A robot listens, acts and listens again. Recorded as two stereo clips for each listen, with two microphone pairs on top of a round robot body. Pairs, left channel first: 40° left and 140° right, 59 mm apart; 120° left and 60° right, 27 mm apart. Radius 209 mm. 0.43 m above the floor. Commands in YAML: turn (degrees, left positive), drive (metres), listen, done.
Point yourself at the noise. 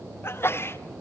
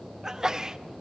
turn: 10
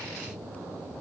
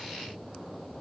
done: "I heard a sneeze from this way, but can't make it out now."